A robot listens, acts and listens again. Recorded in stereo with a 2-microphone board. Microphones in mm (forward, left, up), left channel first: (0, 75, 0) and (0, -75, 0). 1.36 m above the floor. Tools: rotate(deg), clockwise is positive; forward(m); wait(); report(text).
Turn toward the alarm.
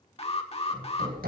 rotate(-40)
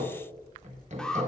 report("Found it: an alarm, straight ahead, 1 to 2 m away.")